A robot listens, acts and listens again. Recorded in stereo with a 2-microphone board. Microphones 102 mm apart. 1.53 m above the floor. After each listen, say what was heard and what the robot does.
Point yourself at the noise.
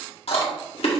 Turn 90° left.
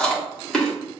Facing the chewing, 1 to 2 m away.